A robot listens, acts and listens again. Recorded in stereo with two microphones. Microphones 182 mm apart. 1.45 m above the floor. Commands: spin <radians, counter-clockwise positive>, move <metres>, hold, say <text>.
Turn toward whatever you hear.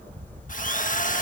spin 0.79
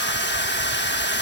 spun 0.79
spin 1.48
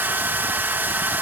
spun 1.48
spin -0.17
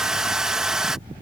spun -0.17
say Found it: a drill, straight ahead.